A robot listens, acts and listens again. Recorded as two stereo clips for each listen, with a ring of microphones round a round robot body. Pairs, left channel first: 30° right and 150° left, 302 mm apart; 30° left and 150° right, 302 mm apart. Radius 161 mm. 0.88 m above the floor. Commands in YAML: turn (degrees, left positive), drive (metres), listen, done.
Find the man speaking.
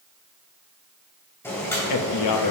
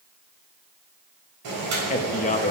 turn: -35
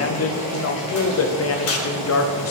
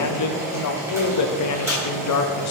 turn: 10
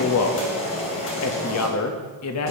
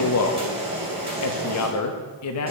done: "Facing the man speaking."